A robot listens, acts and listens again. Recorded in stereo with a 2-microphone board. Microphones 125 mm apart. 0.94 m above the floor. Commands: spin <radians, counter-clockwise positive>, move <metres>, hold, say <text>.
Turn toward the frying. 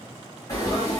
spin 0.44
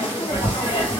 spin 2.27
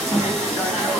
say Found it: frying, straight ahead, 1 to 2 m away.